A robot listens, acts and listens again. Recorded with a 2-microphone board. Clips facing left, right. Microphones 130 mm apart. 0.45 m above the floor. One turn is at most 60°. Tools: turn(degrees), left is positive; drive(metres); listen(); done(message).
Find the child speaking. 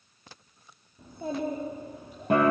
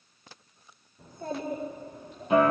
turn(degrees=30)
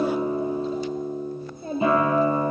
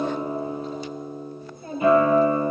turn(degrees=60)
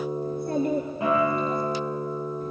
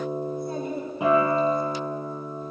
turn(degrees=60)
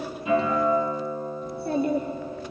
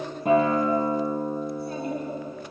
turn(degrees=60)
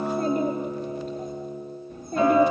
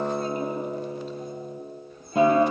turn(degrees=50)
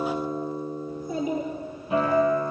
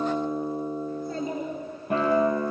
turn(degrees=10)
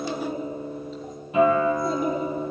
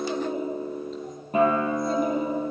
listen()
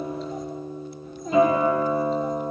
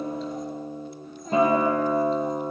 done("Found it: a child speaking, straight ahead, 2 to 4 m away.")